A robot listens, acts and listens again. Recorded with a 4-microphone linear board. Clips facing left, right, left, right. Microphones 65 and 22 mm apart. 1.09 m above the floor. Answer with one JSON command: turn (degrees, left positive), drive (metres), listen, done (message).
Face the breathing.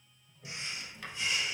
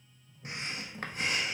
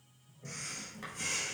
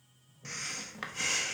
{"turn": -45}
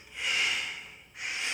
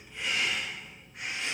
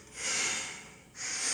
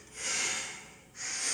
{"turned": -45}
{"done": "Found it: breathing, straight ahead, 1 to 2 m away."}